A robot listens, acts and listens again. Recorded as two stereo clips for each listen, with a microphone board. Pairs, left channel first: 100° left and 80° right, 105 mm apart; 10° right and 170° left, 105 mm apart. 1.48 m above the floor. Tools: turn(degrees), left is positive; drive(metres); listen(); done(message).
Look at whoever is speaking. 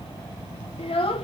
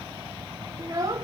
turn(degrees=115)
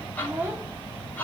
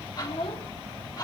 turn(degrees=-10)
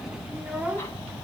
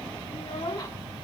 done("Facing the child speaking.")